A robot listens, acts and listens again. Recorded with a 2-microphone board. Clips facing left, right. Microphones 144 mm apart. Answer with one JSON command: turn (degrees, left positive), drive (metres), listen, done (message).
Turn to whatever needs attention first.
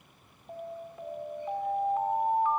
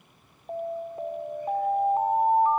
{"turn": -40}
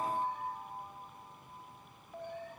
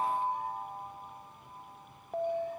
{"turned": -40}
{"turn": -90}
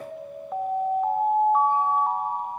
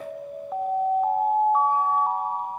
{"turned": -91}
{"done": "Facing the alarm, 1 to 2 m away."}